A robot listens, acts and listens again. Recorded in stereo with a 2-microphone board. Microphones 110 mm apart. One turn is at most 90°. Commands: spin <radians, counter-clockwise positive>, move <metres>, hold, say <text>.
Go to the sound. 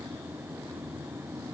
hold
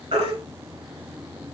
spin -1.22
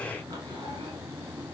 hold
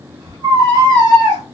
spin -0.70
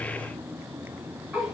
hold
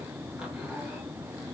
hold
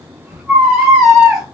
move 1.0
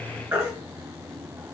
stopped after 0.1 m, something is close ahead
spin -0.26
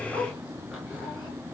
hold
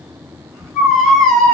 say Something is in my way. I am facing the baby crying but have not reached it.